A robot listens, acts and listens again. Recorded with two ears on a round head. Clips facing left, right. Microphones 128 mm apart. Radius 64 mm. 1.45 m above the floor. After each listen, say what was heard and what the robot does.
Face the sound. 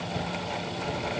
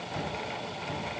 Turn 30° left.
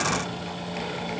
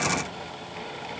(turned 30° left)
Keep listening.
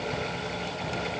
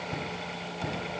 So it is at 25° right. Turn 25° right.
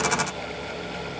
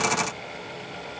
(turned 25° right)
Keep listening.
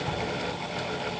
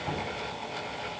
Facing the cupboard door.